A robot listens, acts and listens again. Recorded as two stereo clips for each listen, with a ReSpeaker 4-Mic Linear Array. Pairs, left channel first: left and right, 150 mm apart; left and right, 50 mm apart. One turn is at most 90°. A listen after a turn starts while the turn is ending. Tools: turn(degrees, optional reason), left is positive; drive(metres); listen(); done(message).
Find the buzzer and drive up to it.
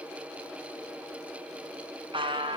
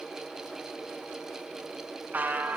turn(degrees=-35, reason="The buzzer: about 35° right or 145° right.")
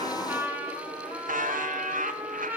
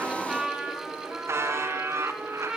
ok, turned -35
turn(degrees=-90, reason="So it is at 105° right.")
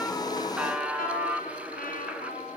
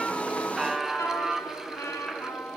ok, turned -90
turn(degrees=-10, reason="The buzzer is now 10° right.")
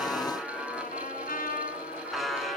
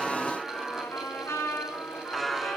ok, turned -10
drive(metres=1.0)
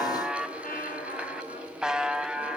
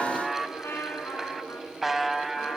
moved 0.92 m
drive(metres=1.0)
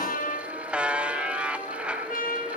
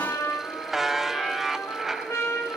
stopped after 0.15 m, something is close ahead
turn(degrees=-10, reason="The buzzer is now 10° right.")
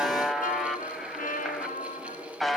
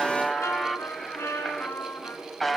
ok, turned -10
done("Arrived at the buzzer, straight ahead.")